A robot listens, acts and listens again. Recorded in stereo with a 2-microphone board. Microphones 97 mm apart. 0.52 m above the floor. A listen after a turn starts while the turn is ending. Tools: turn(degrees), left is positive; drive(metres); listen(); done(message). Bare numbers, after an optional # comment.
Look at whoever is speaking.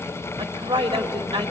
# The woman speaking: about 60° right or 120° right.
turn(-60)
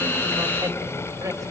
listen()
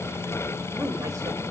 listen()
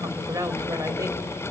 # So it is at 45° right.
turn(-45)
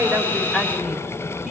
done("Found it: a woman speaking, straight ahead, 2 to 4 m away.")